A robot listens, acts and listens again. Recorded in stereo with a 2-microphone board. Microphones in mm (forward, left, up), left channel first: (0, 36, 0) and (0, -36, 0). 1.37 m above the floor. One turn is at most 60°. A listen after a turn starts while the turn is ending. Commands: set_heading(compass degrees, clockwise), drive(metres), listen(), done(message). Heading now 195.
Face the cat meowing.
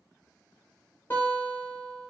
listen()
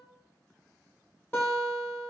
listen()
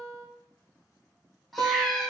set_heading(165)
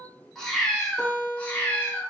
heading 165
set_heading(150)
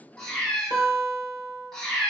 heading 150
set_heading(120)
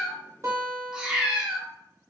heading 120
set_heading(130)
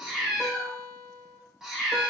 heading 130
done("Found it: a cat meowing, straight ahead.")